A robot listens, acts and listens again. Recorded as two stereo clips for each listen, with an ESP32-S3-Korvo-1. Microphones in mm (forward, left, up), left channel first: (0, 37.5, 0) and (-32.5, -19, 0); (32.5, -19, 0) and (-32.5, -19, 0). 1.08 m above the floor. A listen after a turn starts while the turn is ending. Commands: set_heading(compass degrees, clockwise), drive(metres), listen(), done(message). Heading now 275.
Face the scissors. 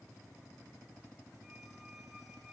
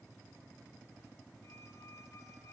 listen()
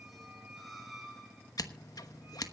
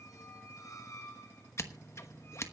set_heading(235)
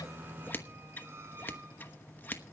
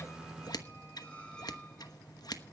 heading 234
done("Facing the scissors, 1 to 2 m away.")